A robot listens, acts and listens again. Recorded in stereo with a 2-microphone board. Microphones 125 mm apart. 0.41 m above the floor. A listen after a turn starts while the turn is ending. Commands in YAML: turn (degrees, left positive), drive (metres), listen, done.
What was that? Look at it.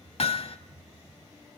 turn: 55
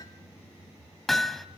done: "Facing the hammering, under 1 m away."